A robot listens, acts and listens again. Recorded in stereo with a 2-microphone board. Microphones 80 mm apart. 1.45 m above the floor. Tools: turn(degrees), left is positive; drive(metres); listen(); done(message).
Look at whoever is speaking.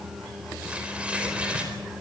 listen()
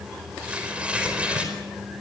listen()
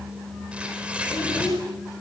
turn(degrees=90)
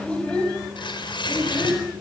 turn(degrees=15)
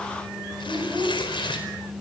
done("Found it: a child speaking, straight ahead, over 4 m away.")